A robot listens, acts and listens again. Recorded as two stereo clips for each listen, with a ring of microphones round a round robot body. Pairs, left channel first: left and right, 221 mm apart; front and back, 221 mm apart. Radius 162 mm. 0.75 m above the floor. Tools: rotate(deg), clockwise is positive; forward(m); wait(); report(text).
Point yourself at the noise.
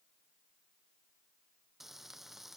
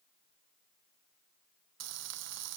rotate(-180)
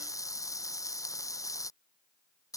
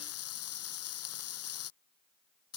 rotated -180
rotate(-15)
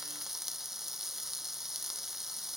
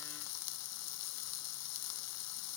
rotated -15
report("Found it: frying, straight ahead.")